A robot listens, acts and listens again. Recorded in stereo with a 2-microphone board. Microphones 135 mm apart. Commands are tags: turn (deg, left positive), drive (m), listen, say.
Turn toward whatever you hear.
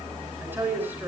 <turn deg="-15"/>
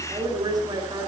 <turn deg="-150"/>
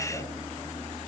<listen/>
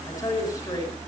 <turn deg="30"/>
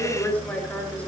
<turn deg="10"/>
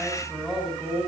<say>Facing the woman speaking.</say>